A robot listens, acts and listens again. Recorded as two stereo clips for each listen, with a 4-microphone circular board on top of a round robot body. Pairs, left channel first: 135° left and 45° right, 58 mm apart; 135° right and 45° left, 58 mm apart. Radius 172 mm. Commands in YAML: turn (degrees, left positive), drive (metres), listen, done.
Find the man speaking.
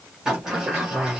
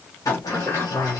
turn: -90
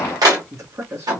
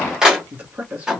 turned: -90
turn: -15
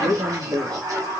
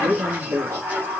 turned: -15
turn: -10
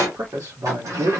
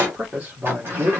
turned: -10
turn: -15
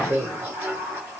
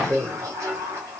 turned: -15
done: "Facing the man speaking."